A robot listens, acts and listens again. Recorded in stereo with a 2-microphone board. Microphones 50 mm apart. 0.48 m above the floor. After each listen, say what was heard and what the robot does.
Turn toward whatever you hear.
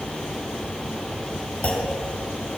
The clunk: about 30° left or 150° left. Turn 30° left.
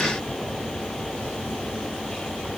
Keep listening.
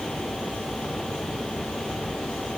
I heard a clunk, but can't make it out now. It was about straight ahead or 120° left.